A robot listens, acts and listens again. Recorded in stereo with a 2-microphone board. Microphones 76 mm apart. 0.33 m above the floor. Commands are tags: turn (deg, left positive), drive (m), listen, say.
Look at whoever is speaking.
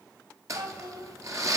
<turn deg="-60"/>
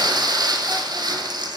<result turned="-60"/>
<listen/>
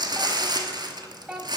<turn deg="-15"/>
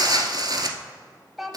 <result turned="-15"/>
<say>Facing the child speaking, under 1 m away.</say>